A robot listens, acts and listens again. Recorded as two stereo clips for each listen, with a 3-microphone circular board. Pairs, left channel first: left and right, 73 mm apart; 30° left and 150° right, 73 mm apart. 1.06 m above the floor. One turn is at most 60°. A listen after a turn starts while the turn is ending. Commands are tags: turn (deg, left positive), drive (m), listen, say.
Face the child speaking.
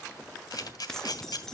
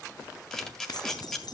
<listen/>
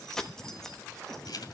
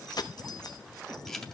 <listen/>
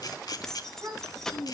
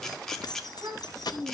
<turn deg="-60"/>
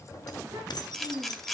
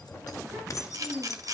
<turn deg="-60"/>
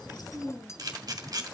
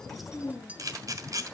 <say>Found it: a child speaking, straight ahead.</say>